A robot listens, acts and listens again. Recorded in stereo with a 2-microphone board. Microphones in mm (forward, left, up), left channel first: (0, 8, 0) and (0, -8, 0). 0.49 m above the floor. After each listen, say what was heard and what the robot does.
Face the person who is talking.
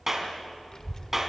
The child speaking: about 40° left or 140° left. Turn 40° left.
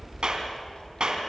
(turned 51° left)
So it is at 75° left. Turn 75° left.
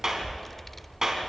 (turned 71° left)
Found it: a child speaking, straight ahead, under 1 m away.